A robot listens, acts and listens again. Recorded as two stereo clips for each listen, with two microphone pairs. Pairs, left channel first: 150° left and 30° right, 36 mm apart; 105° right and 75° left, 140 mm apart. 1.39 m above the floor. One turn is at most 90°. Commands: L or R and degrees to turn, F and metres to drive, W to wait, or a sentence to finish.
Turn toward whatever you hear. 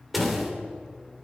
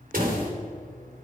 L60
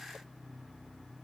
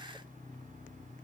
I heard a door slam from this way, but can't make it out now.